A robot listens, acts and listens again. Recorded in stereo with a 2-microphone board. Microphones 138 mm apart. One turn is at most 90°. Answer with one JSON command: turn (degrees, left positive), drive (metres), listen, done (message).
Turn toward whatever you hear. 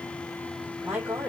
{"turn": -30}
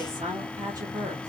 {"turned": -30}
{"turn": -90}
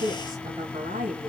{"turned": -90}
{"turn": -80}
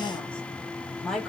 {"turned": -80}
{"done": "Facing the woman speaking."}